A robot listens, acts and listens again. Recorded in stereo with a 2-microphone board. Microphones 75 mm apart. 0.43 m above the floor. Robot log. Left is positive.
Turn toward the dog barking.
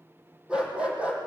note: The dog barking: about 15° right or 165° right.
cmd yaw -15
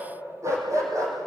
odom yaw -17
note: So it is at 135° right.
cmd yaw -135
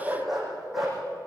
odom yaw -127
end: Found it: a dog barking, straight ahead.